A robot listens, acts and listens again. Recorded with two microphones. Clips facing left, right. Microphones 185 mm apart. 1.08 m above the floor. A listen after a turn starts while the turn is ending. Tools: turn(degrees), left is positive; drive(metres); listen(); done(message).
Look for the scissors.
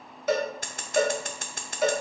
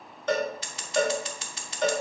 turn(degrees=55)
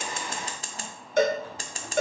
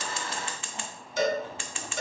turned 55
turn(degrees=50)
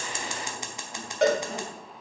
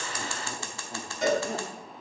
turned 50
turn(degrees=25)
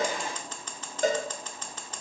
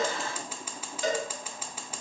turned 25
turn(degrees=-10)
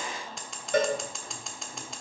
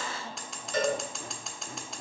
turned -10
done("Found it: scissors, straight ahead, under 1 m away.")